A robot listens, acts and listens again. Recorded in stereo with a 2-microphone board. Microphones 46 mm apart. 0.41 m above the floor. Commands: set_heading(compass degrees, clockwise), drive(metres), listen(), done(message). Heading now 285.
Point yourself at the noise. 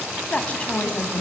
set_heading(255)
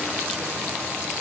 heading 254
listen()
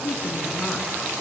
set_heading(244)
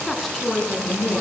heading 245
done("Found it: a woman speaking, straight ahead.")